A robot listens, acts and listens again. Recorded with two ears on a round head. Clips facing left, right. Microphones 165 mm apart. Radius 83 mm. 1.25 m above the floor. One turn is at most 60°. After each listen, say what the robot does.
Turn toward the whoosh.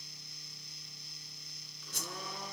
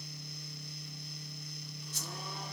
Turn 50° left.
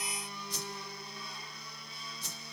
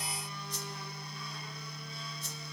Turn 60° left.
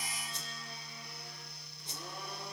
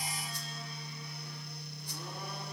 Turn 20° left.
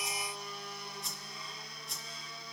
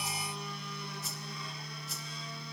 Facing the whoosh.